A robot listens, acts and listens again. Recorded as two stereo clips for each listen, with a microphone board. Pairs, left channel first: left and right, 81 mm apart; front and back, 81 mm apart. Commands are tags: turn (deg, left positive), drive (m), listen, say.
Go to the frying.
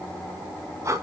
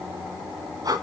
<listen/>
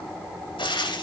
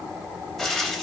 <turn deg="90"/>
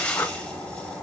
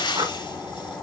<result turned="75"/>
<turn deg="15"/>
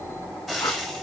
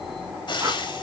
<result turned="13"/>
<drive m="1.0"/>
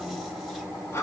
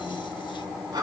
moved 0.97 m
<listen/>
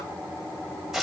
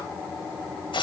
<drive m="1.0"/>
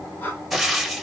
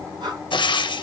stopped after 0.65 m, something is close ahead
<say>I am next to the frying.</say>